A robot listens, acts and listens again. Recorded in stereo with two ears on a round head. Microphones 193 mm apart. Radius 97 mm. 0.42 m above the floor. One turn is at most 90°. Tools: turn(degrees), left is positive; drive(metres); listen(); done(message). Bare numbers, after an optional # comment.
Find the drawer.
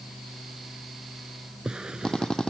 turn(-30)
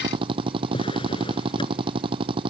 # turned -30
# So it is at 25° left.
turn(25)
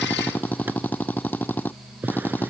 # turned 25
# The drawer is now 10° right.
turn(-10)
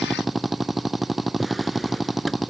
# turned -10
listen()
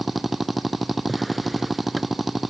listen()
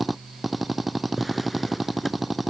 done("Facing the drawer.")